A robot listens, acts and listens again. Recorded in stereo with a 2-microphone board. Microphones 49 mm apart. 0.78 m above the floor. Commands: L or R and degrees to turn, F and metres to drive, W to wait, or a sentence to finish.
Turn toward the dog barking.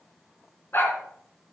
L50
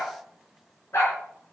L65
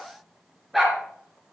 Facing the dog barking.